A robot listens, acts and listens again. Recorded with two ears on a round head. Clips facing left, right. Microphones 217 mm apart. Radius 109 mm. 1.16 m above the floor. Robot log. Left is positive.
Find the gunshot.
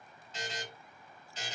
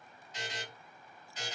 cmd idle
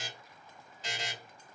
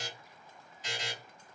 cmd idle
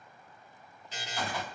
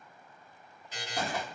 note: The gunshot: about 40° right or 140° right.
cmd yaw -40
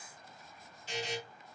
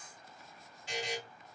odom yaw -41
cmd idle
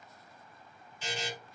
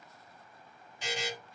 end: I heard a gunshot, but can't make it out now. It was about straight ahead or 100° right.